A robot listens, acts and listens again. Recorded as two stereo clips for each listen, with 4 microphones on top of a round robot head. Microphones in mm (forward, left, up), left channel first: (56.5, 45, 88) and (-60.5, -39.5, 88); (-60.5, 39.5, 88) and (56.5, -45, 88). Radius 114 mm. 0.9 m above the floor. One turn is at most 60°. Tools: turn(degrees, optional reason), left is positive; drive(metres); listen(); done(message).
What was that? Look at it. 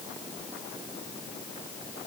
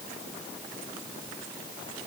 listen()
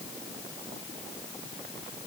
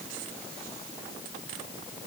listen()
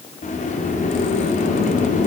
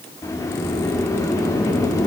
turn(degrees=60, reason="The sliding door: 75° left.")
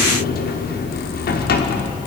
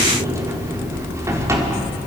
turn(degrees=35, reason="The sliding door is now 35° left.")
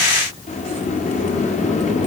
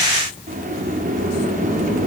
done("Found it: a sliding door, straight ahead, 2 to 4 m away.")